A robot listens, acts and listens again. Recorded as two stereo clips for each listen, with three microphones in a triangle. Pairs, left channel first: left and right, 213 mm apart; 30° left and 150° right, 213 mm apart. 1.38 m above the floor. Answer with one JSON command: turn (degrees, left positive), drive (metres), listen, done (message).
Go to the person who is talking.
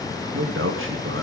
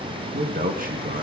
{"turn": -100}
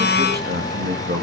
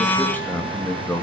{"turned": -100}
{"turn": -50}
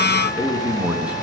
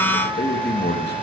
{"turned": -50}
{"drive": 1.0}
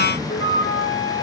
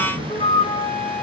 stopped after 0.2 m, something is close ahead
{"turn": -15}
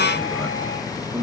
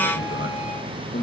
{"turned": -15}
{"done": "Blocked. The man speaking is further on, straight ahead."}